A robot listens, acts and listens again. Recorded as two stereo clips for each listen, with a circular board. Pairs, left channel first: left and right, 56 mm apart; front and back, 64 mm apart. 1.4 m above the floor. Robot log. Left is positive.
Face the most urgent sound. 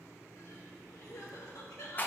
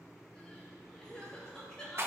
note: The crying: 80° left.
cmd yaw +80
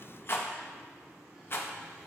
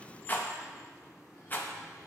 cmd idle
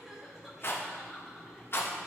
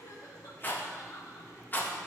end: Found it: crying, straight ahead, 1 to 2 m away.